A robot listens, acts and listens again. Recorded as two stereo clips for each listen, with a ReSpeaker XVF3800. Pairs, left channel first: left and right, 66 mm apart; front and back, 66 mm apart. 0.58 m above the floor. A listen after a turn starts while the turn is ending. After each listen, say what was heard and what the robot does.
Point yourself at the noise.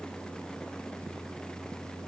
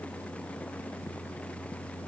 Keep listening.
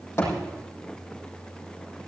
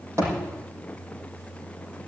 The thud: 140° left. Turn 140° left.
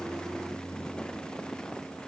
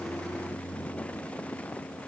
Facing where the thud came from. I can't hear it now.